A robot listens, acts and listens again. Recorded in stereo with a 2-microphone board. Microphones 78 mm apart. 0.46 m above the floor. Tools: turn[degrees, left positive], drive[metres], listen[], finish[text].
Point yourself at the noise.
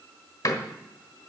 Thought: The door slam: about 50° left or 130° left.
Action: turn[50]
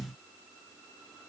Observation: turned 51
Action: listen[]
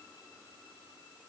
Action: finish[I heard a door slam, but can't make it out now. It was about straight ahead or 80° left.]